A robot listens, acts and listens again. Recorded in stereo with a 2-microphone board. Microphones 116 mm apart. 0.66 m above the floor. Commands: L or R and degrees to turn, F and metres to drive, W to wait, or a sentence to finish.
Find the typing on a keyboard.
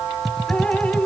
L30
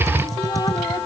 R30
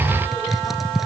Found it: typing on a keyboard, straight ahead.